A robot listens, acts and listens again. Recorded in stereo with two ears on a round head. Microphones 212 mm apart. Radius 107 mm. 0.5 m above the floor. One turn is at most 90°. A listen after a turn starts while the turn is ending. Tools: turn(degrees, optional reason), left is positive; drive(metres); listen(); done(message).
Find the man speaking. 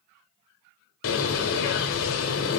listen()
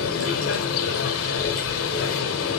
listen()
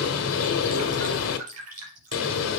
done("I can't make out a man speaking, only dripping and a bird.")